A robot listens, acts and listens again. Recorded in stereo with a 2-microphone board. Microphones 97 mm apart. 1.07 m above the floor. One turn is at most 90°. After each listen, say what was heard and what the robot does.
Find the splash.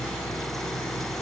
Keep listening.
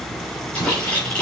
Turn 30° left.
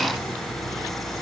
Keep listening.
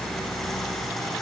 I heard a splash, but can't make it out now. It was about 15° right or 135° left.